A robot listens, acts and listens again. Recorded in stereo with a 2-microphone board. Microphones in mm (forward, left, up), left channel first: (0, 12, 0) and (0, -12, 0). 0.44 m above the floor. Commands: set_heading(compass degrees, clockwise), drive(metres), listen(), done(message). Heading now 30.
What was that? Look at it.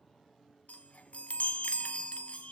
set_heading(325)
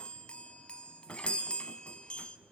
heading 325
set_heading(275)
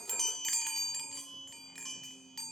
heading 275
set_heading(265)
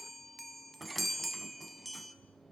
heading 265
done("Found it: a chime, straight ahead, 1 to 2 m away.")